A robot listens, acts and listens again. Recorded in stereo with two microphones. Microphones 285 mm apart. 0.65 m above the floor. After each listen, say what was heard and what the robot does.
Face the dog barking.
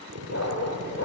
The dog barking: about 65° left or 115° left. Turn 65° left.
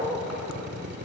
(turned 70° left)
Facing the dog barking.